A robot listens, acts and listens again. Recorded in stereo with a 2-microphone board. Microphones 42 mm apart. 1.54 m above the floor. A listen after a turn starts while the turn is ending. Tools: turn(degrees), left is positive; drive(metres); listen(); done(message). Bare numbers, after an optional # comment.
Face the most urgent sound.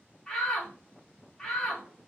# The shout: about 15° left or 165° left.
turn(15)
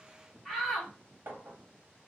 done("Found it: a shout, straight ahead, 1 to 2 m away.")